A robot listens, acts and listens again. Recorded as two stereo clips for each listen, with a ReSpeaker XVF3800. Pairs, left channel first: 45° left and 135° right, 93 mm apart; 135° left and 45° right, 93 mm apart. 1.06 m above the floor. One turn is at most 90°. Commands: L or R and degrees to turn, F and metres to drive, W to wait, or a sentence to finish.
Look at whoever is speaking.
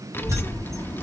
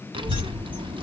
R20
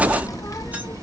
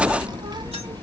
Found it: a child speaking, straight ahead, under 1 m away.